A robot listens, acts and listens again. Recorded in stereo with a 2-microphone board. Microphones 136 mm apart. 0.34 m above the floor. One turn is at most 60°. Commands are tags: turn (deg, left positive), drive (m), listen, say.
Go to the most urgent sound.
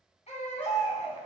<turn deg="55"/>
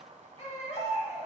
<turn deg="60"/>
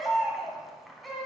<drive m="1.0"/>
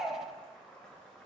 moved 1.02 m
<drive m="1.0"/>
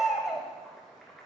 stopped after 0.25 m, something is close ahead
<say>Arrived at the baby crying, straight ahead.</say>